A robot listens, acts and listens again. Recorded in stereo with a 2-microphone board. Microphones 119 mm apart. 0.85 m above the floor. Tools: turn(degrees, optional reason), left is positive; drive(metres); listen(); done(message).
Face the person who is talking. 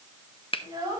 turn(degrees=-35, reason="The child speaking: about 35° right or 145° right.")
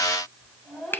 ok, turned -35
done("Facing the child speaking.")